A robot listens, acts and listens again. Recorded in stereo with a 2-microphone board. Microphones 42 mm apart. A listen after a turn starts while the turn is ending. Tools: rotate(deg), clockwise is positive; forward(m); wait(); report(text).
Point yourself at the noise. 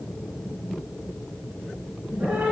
rotate(55)
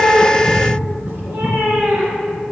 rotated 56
rotate(65)
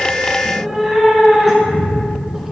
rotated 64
report("Facing the cat meowing.")